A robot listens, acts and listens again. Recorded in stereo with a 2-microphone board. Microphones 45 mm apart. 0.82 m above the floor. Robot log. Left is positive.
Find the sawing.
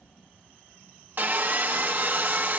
note: The sawing: about 45° right or 135° right.
cmd yaw -45
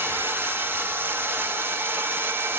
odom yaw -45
note: So it is at 75° right.
cmd yaw -75
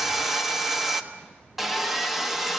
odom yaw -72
end: Found it: sawing, straight ahead, 1 to 2 m away.